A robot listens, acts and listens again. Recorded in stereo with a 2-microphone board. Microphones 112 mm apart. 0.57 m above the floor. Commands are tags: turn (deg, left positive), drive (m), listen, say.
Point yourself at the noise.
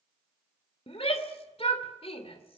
<turn deg="60"/>
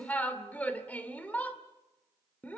<turn deg="15"/>
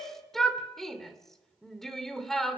<say>Found it: a shout, straight ahead.</say>